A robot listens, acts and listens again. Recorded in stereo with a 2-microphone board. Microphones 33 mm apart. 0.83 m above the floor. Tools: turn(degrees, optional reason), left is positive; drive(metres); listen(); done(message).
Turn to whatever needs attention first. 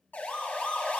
turn(degrees=65, reason="The siren: about 65° left or 115° left.")
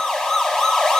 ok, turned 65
turn(degrees=20, reason="So it is at 20° left.")
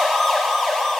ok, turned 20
done("Found it: a siren, straight ahead, 2 to 4 m away.")